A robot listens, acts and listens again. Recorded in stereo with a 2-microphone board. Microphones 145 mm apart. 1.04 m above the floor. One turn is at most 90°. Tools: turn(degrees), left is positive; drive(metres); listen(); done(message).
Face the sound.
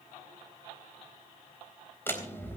turn(degrees=15)
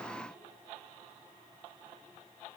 listen()
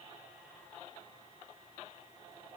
done("I heard a door slam, but can't make it out now. It was about straight ahead or 150° left.")